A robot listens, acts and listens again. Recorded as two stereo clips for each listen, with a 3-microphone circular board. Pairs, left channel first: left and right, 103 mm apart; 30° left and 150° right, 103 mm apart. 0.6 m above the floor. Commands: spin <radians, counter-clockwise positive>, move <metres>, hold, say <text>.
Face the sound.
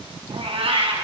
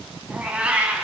spin -1.31
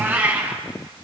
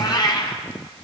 spin -0.35
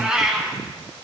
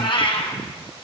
spin -0.17
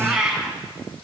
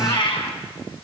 spin -0.17
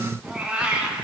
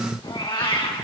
spin -0.17
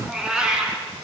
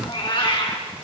say Found it: a cat meowing, straight ahead.